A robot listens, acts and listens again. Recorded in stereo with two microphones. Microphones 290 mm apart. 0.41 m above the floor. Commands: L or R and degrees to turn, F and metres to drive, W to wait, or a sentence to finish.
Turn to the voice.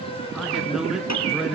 L30
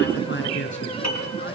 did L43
L140
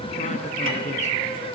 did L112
L25
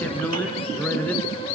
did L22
Facing the man speaking.